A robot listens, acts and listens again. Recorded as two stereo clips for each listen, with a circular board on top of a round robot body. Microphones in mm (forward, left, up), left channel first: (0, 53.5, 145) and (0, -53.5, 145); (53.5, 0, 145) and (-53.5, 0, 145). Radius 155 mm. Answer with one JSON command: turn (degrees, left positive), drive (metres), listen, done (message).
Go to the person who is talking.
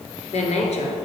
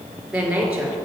{"turn": 95}
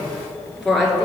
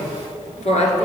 {"drive": 1.0}
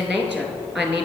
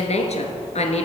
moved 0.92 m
{"turn": -10}
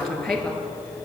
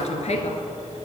{"drive": 1.0}
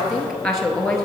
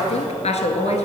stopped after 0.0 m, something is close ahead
{"done": "I am next to the woman speaking."}